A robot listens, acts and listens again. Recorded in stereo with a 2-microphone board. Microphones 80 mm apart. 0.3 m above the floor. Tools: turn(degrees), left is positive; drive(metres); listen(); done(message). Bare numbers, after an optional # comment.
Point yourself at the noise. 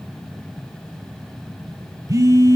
# The phone buzzing: about 45° right or 135° right.
turn(-45)
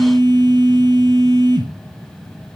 # So it is at 80° right.
turn(-80)
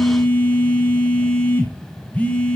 # The phone buzzing is now 20° left.
turn(20)
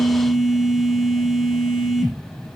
done("Found it: a phone buzzing, straight ahead, 1 to 2 m away.")